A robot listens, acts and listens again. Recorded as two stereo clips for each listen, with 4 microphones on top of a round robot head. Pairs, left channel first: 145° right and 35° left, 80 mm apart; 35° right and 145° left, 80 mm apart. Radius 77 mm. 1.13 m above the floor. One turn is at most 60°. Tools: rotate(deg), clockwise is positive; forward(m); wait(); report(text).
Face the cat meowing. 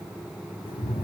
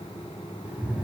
rotate(60)
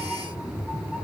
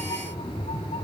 rotate(50)
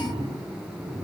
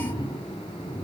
report("Found it: a cat meowing, straight ahead, over 4 m away.")